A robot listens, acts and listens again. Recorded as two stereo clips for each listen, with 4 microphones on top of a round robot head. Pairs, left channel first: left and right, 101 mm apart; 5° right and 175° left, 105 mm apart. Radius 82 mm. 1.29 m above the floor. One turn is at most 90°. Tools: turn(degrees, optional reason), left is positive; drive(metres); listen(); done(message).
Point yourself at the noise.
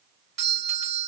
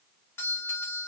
turn(degrees=-75, reason="The doorbell: 75° right.")
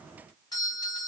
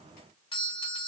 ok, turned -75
turn(degrees=35, reason="The doorbell is now 35° left.")
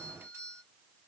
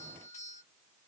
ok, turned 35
turn(degrees=-20, reason="The doorbell is now 20° right.")
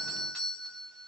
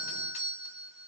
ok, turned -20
done("Facing the doorbell, 1 to 2 m away.")